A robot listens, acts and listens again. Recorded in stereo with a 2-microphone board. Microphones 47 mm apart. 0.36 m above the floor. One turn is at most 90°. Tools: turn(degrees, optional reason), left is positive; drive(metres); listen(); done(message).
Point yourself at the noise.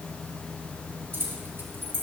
turn(degrees=-55, reason="The keys jangling: about 55° right or 125° right.")
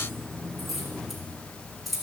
done("Found it: keys jangling, straight ahead.")